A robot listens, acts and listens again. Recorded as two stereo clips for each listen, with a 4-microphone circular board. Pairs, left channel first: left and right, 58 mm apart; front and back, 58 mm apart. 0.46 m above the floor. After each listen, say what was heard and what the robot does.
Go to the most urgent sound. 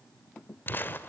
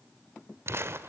Keep listening.
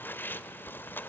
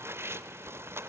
Keep listening.
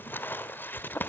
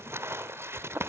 I can't make out anything urgent, only crumpling.